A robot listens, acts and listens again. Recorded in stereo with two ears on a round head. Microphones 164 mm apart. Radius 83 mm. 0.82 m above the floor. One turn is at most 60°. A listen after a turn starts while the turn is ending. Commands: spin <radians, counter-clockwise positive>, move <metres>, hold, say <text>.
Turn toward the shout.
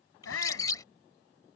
spin 1.05
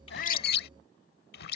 spin 0.52
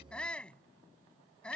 say Facing the shout.